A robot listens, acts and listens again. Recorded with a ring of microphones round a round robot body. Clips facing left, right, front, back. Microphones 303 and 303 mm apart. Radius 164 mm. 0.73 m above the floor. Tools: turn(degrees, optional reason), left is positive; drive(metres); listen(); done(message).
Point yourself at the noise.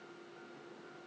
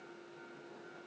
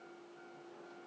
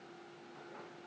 listen()
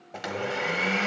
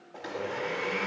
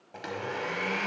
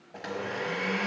turn(degrees=80, reason="The blender: 80° left.")
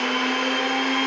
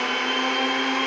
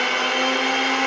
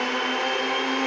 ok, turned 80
done("Found it: a blender, straight ahead.")